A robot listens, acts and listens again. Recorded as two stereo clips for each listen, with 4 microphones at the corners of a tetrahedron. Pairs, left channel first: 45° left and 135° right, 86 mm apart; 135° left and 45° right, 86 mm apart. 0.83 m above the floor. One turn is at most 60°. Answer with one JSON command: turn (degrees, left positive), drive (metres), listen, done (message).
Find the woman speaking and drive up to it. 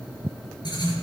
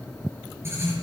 {"listen": true}
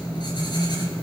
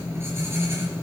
{"listen": true}
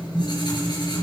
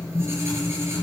{"done": "I can't make out a woman speaking to turn to."}